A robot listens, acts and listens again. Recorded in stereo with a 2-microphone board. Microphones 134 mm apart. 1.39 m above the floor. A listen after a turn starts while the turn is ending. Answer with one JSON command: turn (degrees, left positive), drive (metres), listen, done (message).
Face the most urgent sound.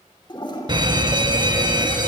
{"turn": -35}
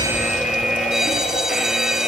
{"done": "Found it: a fire alarm, straight ahead, 1 to 2 m away."}